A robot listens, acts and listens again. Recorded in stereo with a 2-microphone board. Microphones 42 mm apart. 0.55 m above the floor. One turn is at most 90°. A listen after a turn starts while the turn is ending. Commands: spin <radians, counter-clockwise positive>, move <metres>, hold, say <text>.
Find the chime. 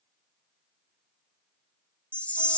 spin 0.52
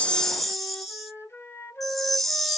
say Found it: a chime, straight ahead.